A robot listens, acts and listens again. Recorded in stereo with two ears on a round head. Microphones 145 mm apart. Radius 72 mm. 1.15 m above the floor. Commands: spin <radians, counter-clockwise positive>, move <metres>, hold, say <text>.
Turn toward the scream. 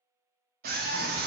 spin -1.05
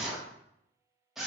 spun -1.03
say Found it: a scream, straight ahead, under 1 m away.